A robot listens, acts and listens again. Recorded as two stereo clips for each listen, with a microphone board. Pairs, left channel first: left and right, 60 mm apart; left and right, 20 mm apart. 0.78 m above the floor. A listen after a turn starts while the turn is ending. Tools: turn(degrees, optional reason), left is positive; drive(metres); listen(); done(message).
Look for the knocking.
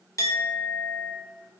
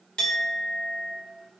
listen()
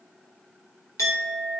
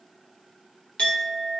listen()
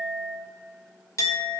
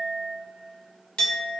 done("I can't make out knocking, only a clink.")